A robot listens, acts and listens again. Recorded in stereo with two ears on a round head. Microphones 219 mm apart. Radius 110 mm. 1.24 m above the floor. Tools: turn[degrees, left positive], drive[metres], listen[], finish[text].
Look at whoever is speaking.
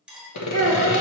Action: turn[30]
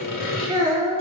Thought: So it is at 15° right.
Action: turn[-15]
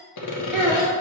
Action: finish[Found it: a child speaking, straight ahead.]